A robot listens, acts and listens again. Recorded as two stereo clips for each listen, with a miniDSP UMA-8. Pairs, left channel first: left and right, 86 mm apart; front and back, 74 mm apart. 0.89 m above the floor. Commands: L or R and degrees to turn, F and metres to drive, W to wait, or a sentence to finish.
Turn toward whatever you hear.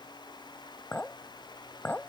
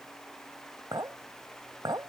L160
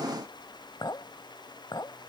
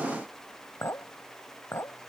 L55
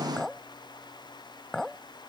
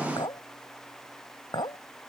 Found it: a clink, straight ahead.